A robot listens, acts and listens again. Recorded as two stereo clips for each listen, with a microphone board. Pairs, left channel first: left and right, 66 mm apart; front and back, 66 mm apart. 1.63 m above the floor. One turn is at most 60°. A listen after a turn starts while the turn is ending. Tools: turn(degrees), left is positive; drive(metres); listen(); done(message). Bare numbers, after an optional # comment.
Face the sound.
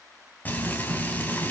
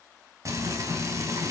# The frying: 150° left.
turn(60)
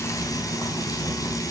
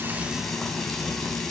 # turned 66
# The frying is now 85° left.
turn(60)
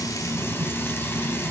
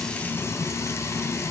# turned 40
# The frying is now 40° left.
turn(40)
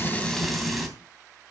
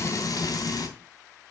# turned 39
done("Found it: frying, straight ahead.")